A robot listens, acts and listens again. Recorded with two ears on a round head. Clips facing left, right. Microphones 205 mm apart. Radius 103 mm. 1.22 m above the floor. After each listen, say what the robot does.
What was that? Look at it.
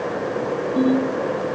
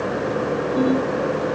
Turn 45° left.
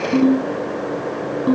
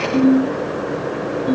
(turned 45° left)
Turn 90° left.
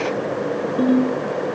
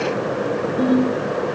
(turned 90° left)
Turn 15° left.
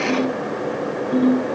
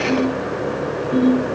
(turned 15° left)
Facing the ringtone.